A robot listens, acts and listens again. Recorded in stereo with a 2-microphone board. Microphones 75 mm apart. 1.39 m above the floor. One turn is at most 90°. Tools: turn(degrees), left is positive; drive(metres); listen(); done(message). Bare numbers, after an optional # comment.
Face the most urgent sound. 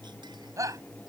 # The shout: about 45° right or 135° right.
turn(-45)
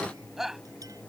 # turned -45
done("Found it: a shout, straight ahead.")